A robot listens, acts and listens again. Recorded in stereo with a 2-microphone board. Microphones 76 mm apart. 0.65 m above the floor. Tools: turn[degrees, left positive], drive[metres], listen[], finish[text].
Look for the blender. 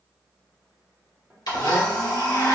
Thought: The blender: about 60° left or 120° left.
Action: turn[60]
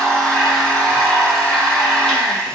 Thought: So it is at 10° left.
Action: turn[10]
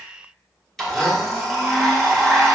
Action: finish[Facing the blender.]